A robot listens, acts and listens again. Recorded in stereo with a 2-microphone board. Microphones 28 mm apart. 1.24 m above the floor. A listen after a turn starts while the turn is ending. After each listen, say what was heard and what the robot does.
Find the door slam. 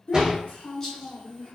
The door slam: about 25° right or 155° right. Turn 25° right.
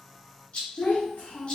Keep listening.
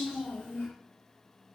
I heard a door slam, but can't make it out now. It was about straight ahead or 130° right.